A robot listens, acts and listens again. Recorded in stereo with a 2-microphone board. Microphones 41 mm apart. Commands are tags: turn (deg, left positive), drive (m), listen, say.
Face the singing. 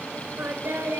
<turn deg="-65"/>
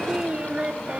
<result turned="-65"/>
<turn deg="-25"/>
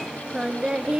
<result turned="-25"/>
<turn deg="-20"/>
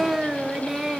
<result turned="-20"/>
<turn deg="-15"/>
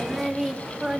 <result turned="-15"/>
<turn deg="-10"/>
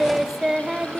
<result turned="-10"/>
<turn deg="-15"/>
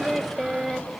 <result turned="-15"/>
<say>Facing the singing.</say>